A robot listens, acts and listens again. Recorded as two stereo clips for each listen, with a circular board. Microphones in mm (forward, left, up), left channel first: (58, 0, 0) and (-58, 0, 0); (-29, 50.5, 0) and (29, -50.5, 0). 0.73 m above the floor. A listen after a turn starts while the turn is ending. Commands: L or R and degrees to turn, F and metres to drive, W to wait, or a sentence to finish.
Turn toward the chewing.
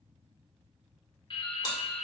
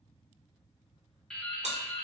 R55
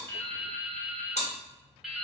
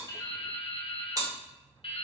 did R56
Facing the chewing.